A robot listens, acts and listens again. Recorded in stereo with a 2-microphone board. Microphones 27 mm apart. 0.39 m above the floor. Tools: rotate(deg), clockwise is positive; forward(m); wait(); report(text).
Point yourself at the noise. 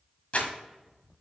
rotate(-55)
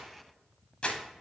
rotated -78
rotate(-45)
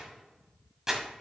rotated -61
rotate(20)
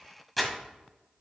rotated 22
report("Found it: crumpling, straight ahead, 1 to 2 m away.")